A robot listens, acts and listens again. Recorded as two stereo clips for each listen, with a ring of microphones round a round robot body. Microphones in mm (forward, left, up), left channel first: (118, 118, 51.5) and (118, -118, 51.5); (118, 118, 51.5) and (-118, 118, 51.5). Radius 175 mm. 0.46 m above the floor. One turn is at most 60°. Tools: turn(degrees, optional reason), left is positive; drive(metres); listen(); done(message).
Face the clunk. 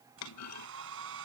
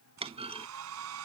turn(degrees=60, reason="The clunk: 115° left.")
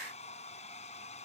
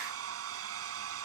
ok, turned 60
turn(degrees=55, reason="Nothing new. It was at 55° left.")
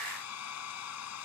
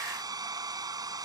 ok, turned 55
done("I heard a clunk from this way, but can't make it out now.")